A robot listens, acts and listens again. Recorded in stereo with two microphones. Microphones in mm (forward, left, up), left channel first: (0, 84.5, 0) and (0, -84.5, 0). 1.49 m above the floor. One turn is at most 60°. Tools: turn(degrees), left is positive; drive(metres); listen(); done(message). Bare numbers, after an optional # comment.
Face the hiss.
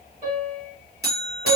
listen()
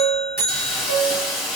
turn(30)
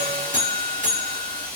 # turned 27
# So it is at 155° left.
turn(60)
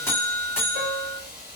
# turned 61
# The hiss is now 95° left.
turn(60)
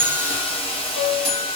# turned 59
# The hiss is now 35° left.
turn(35)
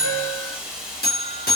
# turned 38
done("Found it: a hiss, straight ahead.")